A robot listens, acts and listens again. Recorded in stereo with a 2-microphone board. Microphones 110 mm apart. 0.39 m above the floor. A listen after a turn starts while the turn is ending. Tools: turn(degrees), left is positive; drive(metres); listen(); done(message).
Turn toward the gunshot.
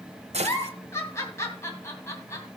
turn(degrees=-90)
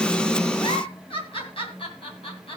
done("I heard a gunshot from this way, but can't make it out now.")